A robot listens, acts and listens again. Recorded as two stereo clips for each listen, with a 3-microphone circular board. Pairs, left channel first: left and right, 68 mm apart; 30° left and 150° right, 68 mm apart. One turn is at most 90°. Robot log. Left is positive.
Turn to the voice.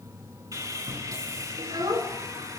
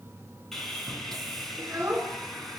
note: The child speaking: 90° right.
cmd yaw -90
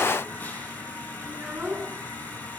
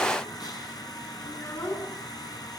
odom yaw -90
note: The child speaking is now 15° right.
cmd yaw -15
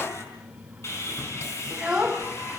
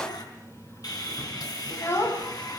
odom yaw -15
note: The child speaking is now 10° right.
cmd yaw -10
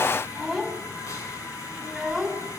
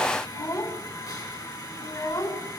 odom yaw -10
end: Found it: a child speaking, straight ahead.